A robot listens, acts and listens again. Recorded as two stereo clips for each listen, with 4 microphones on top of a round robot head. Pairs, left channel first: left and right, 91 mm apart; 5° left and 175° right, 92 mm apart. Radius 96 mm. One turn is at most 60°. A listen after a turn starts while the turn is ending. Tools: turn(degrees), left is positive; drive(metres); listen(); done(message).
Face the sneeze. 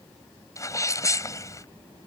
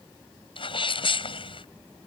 turn(degrees=35)
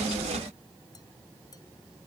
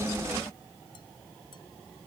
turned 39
done("Facing where the sneeze came from. I can't hear it now.")